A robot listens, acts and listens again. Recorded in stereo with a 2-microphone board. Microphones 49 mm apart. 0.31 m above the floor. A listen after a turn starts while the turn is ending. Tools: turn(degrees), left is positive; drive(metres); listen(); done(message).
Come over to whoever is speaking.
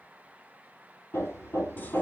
listen()
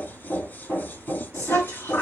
turn(degrees=65)
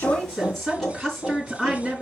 turn(degrees=10)
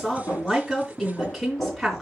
drive(metres=1.0)
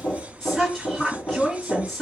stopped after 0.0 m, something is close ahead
done("Blocked. The woman speaking is further on, straight ahead.")